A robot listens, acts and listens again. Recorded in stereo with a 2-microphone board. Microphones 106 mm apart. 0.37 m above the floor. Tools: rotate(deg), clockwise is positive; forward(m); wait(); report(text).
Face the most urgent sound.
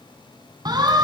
rotate(40)
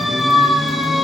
report("Found it: a siren, straight ahead, over 4 m away.")